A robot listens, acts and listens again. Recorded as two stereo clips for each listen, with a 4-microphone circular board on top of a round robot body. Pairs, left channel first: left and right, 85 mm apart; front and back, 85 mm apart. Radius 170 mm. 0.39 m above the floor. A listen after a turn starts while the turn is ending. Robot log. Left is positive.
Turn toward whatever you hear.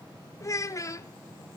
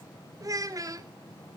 note: The child speaking: 135° left.
cmd yaw +135
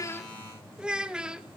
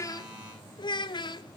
note: The child speaking is now 10° right.
cmd yaw -10
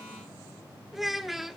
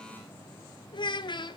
end: Facing the child speaking.